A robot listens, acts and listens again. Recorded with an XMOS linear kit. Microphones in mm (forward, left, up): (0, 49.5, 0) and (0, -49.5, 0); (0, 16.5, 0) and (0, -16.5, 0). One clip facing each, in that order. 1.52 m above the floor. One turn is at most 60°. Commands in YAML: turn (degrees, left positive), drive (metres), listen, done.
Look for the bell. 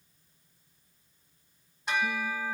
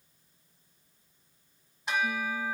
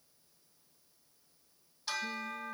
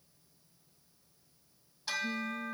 turn: 30
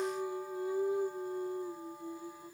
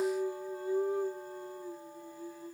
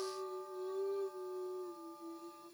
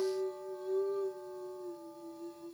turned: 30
listen: true
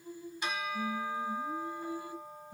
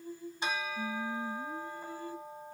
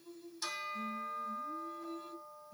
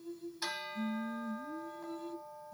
turn: -30
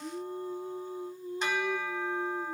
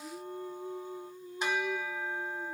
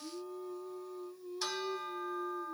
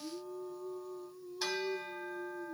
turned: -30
turn: -10
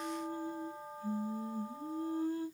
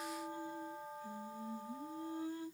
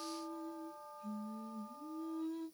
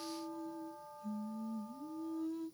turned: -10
done: "Found it: a bell, straight ahead."